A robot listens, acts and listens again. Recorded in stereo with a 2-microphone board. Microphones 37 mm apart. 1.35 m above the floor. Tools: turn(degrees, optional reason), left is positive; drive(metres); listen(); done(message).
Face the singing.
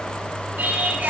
turn(degrees=-65, reason="The singing: about 65° right or 115° right.")
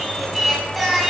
done("Found it: singing, straight ahead, 2 to 4 m away.")